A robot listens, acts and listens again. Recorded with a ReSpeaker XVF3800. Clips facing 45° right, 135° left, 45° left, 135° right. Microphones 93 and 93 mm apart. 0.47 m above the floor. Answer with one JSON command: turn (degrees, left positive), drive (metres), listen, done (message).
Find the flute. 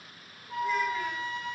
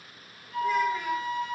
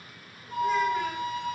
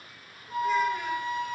{"turn": -100}
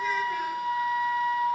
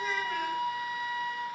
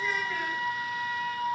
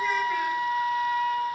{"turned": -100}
{"turn": -10}
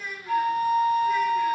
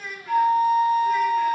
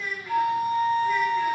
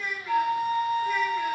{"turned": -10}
{"done": "Facing the flute."}